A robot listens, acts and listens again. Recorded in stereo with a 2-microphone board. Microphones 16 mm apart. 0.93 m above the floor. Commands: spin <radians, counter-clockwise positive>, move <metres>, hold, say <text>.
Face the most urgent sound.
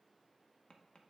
hold
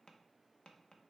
hold
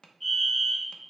spin 0.52
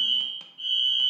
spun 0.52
spin 2.36
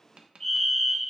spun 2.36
spin 0.44
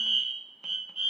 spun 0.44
spin -0.44
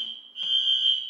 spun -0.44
say Found it: a fire alarm, straight ahead, 2 to 4 m away.